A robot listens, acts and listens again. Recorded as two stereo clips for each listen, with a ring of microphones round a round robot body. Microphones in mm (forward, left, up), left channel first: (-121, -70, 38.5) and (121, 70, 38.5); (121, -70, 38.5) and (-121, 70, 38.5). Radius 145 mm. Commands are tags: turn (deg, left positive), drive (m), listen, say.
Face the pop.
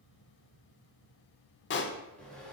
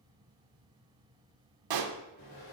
<turn deg="155"/>
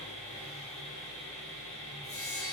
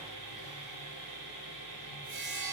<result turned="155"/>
<say>Facing where the pop came from. I can't hear it now.</say>